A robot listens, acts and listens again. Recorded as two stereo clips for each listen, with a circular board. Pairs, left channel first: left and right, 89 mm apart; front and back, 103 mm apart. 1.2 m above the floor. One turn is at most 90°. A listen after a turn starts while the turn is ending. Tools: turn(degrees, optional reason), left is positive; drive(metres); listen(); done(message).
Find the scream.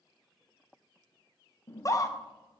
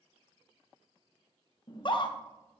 turn(degrees=40, reason="The scream: 40° left.")
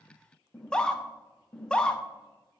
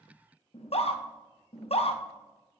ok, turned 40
turn(degrees=10, reason="The scream is now 10° left.")
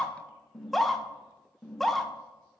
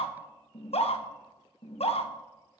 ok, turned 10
done("Facing the scream, 1 to 2 m away.")